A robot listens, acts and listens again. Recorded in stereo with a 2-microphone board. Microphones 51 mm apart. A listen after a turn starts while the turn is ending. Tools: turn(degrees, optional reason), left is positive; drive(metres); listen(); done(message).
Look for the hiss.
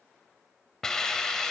turn(degrees=15, reason="The hiss: about 15° left or 165° left.")
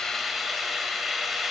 done("Found it: a hiss, straight ahead.")